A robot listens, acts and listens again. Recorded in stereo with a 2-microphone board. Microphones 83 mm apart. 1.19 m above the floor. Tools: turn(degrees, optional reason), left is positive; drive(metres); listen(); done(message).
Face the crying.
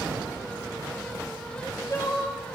turn(degrees=40, reason="The crying: about 40° left or 140° left.")
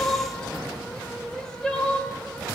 done("Found it: crying, straight ahead.")